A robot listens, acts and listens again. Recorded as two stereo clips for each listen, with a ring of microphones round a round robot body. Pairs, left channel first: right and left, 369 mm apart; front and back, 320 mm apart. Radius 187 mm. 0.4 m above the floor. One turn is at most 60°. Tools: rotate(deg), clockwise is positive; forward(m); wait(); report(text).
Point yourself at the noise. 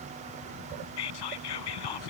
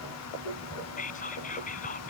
rotate(60)
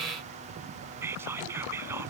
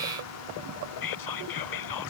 report("Facing the whispering.")